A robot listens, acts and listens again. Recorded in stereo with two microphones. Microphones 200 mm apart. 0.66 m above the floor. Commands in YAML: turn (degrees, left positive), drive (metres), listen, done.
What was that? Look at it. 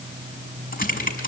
turn: 45
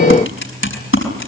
turn: 90
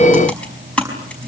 done: "Found it: typing on a keyboard, straight ahead."